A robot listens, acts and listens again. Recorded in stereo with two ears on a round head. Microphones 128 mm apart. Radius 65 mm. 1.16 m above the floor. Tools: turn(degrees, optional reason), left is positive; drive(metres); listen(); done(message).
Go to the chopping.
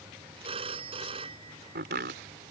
turn(degrees=-90)
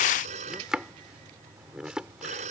drive(metres=1.0)
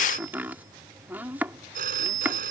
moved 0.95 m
turn(degrees=-10, reason="The chopping is now 10° right.")
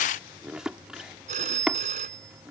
drive(metres=1.0)
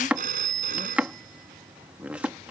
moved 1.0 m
turn(degrees=-10, reason="The chopping is now 10° right.")
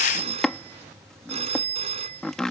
drive(metres=1.0)
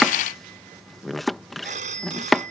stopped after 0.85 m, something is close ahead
done("I am next to the chopping.")